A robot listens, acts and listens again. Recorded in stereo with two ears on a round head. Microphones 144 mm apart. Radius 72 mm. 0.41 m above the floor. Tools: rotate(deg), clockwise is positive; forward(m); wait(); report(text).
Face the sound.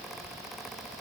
wait()
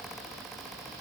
wait()
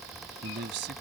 rotate(70)
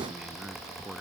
report("Facing the man speaking.")